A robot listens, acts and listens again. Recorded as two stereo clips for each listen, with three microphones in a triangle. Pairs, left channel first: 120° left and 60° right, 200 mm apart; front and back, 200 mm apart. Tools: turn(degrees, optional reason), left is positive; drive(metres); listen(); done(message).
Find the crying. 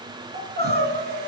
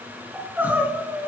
turn(degrees=-100, reason="The crying: 100° right.")
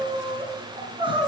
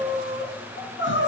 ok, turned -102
done("Facing the crying.")